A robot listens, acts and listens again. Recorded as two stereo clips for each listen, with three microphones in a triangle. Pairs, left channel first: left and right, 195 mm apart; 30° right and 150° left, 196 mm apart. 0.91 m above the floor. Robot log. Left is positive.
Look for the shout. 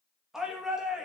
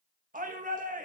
note: The shout: 175° right.
cmd yaw -175
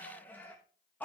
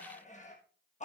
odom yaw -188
note: The shout is now 10° left.
cmd yaw +10
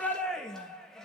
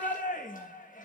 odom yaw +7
end: Found it: a shout, straight ahead, 1 to 2 m away.